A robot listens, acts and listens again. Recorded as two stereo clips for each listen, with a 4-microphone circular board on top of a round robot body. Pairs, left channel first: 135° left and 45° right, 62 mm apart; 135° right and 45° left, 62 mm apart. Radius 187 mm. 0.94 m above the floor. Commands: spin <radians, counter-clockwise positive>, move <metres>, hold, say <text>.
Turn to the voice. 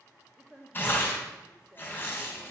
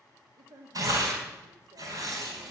spin 0.61
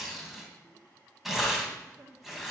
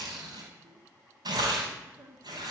say Found it: a woman speaking, straight ahead, 1 to 2 m away.